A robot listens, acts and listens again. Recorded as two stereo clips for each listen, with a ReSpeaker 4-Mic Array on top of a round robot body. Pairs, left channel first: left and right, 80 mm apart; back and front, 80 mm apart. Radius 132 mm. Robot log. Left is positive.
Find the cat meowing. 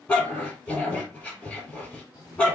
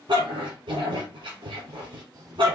note: The cat meowing: 45° left.
cmd yaw +45
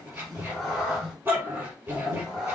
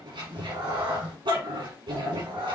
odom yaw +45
end: Facing the cat meowing.